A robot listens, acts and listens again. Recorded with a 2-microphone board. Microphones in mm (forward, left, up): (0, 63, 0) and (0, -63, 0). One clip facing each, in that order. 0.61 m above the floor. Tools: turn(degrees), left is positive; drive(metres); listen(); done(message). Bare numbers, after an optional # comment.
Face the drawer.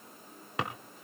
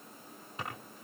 turn(90)
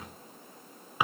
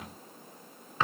# So it is at 15° left.
turn(15)
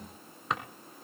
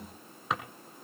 done("Found it: a drawer, straight ahead, 1 to 2 m away.")